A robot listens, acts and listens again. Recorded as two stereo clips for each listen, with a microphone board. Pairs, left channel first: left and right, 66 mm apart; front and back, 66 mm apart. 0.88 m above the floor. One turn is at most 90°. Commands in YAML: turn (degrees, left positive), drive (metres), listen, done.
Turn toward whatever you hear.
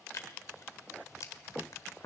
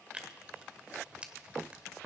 turn: 90
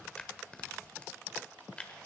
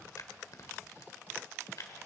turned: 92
turn: 20
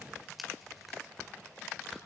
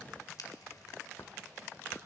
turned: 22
done: "Facing the tearing paper."